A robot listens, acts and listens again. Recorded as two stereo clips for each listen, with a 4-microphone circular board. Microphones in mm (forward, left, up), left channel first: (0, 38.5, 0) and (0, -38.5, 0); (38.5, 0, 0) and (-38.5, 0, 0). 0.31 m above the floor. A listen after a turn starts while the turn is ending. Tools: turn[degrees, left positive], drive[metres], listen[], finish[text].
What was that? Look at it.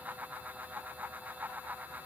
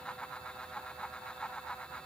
Action: listen[]
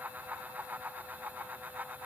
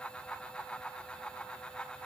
Action: listen[]
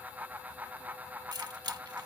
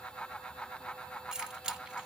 Thought: The keys jangling: 100° right.
Action: turn[-100]
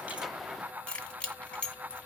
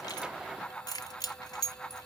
Thought: The keys jangling is now 15° left.
Action: turn[15]
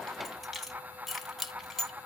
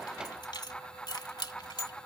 Action: finish[Found it: keys jangling, straight ahead.]